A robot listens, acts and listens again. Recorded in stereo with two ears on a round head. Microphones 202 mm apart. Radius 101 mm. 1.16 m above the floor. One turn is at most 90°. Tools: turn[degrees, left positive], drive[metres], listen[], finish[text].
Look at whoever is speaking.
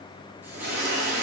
Action: listen[]
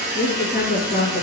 Thought: The woman speaking: about 35° left or 145° left.
Action: turn[35]
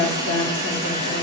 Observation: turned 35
Thought: So it is at 115° left.
Action: turn[90]
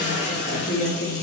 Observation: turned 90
Thought: The woman speaking is now 40° left.
Action: turn[40]
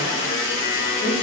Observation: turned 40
Action: listen[]
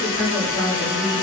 Thought: The woman speaking is now 10° left.
Action: turn[10]
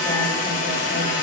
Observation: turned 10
Action: listen[]
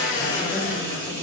Action: listen[]
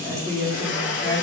Action: finish[Found it: a woman speaking, straight ahead, 2 to 4 m away.]